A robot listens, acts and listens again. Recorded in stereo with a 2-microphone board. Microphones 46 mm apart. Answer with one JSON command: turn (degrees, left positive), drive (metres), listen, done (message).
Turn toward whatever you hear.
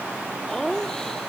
{"turn": 30}
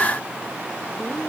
{"listen": true}
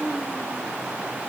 {"turn": 140}
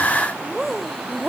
{"done": "Found it: laughter, straight ahead."}